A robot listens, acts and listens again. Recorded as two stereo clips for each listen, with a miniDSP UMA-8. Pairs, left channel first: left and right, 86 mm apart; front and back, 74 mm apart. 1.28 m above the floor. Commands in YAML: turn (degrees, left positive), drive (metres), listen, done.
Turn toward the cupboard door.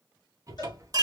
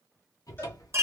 turn: -40
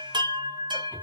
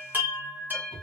turn: -25
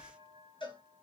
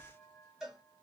listen: true
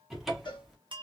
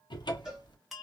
done: "Facing the cupboard door."